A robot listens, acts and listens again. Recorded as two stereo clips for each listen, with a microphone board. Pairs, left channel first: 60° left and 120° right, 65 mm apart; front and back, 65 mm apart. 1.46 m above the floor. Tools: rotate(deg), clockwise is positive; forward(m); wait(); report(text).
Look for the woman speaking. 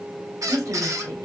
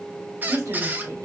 rotate(145)
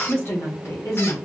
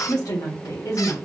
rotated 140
rotate(-30)
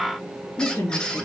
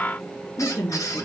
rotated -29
rotate(-30)
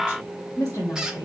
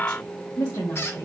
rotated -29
rotate(-25)
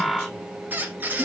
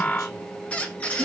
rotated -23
rotate(-10)
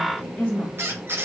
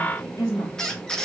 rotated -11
report("Facing the woman speaking, 2 to 4 m away.")